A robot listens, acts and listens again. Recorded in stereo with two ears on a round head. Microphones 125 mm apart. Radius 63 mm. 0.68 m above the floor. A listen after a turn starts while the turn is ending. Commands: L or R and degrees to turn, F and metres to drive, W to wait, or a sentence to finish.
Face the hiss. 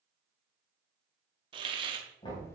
R35
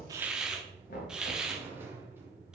Found it: a hiss, straight ahead, 1 to 2 m away.